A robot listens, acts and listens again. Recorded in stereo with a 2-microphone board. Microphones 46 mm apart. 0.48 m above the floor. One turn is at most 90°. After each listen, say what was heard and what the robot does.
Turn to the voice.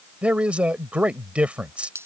The man speaking: about 30° right or 150° right. Turn 30° right.
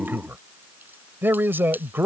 So it is at 115° right. Turn 90° right.
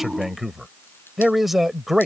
Found it: a man speaking, straight ahead.